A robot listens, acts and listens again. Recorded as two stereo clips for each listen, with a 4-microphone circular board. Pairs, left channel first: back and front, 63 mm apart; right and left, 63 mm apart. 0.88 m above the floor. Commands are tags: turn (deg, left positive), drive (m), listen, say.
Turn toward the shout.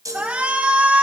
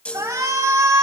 <turn deg="70"/>
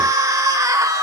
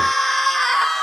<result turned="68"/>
<say>Found it: a shout, straight ahead, 2 to 4 m away.</say>